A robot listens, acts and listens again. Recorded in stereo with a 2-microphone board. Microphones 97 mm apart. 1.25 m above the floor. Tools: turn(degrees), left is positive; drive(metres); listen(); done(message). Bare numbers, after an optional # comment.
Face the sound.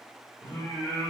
# The singing: about 25° left or 155° left.
turn(25)
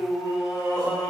# The singing: about 35° left or 145° left.
turn(35)
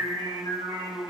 # So it is at 130° left.
turn(130)
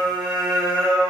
done("Facing the singing, 1 to 2 m away.")